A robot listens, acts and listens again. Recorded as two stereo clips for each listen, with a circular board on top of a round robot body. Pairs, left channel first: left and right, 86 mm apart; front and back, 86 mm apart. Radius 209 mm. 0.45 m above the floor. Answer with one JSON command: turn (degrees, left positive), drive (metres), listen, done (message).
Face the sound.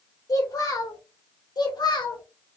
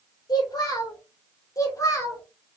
{"turn": 55}
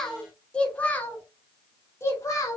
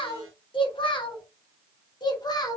{"turn": 40}
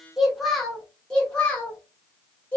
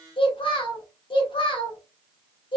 {"turn": 15}
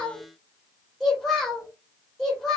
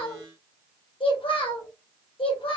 {"done": "Facing the child speaking."}